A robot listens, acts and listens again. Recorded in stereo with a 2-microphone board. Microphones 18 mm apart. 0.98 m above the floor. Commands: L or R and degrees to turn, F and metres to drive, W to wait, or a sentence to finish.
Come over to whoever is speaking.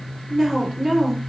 R20
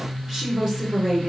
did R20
R140
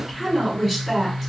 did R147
L10
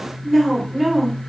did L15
F1.0
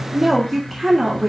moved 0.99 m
F1.0
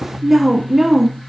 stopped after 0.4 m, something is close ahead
R15
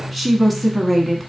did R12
Arrived at the woman speaking, straight ahead.